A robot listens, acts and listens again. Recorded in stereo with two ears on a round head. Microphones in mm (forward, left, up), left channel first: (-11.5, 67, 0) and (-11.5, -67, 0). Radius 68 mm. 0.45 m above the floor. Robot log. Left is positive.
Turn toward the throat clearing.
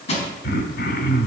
note: The throat clearing: about 70° left or 110° left.
cmd yaw +70
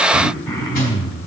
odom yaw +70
note: So it is at 25° left.
cmd yaw +25
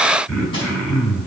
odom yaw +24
end: Found it: throat clearing, straight ahead.